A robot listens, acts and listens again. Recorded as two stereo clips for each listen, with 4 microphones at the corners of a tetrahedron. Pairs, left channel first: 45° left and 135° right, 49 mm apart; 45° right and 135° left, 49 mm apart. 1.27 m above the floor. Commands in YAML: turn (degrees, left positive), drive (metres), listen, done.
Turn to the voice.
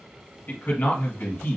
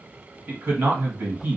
turn: 95
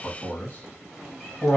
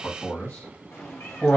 done: "Facing the man speaking, 1 to 2 m away."